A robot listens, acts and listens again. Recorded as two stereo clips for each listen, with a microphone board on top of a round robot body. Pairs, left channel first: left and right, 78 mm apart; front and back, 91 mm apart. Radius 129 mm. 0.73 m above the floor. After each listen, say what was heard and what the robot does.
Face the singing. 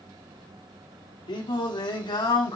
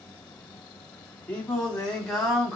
The singing: 90° left. Turn 90° left.
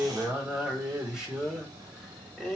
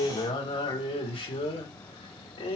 Found it: singing, straight ahead, 2 to 4 m away.